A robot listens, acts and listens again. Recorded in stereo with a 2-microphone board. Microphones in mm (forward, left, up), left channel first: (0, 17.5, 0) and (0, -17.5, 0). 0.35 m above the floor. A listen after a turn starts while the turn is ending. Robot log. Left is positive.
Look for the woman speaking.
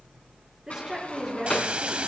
note: The woman speaking: about 25° right or 155° right.
cmd yaw -25
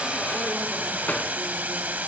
cmd idle
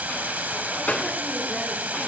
cmd idle
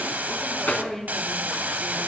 end: Found it: a woman speaking, straight ahead, over 4 m away.